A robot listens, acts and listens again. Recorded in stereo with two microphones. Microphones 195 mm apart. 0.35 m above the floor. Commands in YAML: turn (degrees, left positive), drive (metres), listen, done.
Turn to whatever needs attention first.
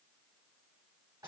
listen: true
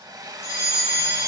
turn: -60
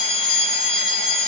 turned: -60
turn: -45
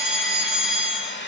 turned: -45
done: "Found it: a fire alarm, straight ahead."